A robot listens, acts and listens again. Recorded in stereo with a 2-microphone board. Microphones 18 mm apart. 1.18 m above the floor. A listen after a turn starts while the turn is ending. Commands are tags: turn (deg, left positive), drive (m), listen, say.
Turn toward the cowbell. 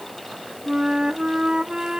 <listen/>
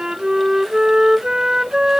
<listen/>
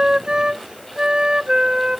<say>I can't make out a cowbell, only a flute.</say>